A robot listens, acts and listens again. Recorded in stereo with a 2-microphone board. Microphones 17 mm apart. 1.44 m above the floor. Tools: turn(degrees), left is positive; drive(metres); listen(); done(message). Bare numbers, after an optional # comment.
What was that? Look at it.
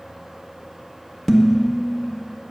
turn(30)
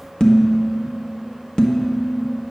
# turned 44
# So it is at 125° left.
turn(125)
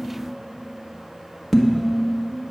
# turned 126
done("Found it: dishes clattering, straight ahead, 1 to 2 m away.")